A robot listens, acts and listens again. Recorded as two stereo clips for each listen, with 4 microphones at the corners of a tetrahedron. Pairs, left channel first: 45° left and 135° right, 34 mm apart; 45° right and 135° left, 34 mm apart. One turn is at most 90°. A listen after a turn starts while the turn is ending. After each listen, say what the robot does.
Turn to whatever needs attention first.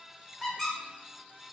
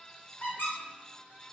Keep listening.
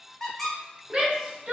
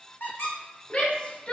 Turn 85° right.
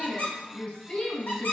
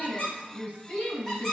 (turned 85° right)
Turn 20° right.
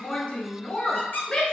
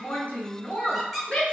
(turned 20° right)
Turn 10° right.
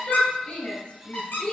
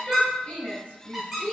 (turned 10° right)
Found it: a shout, straight ahead.